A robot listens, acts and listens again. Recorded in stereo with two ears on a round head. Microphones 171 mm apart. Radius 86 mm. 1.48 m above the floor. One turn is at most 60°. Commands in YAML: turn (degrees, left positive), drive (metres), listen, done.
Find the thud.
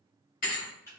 turn: 45
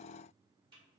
listen: true
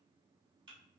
done: "I heard a thud, but can't make it out now. It was about straight ahead or 90° left."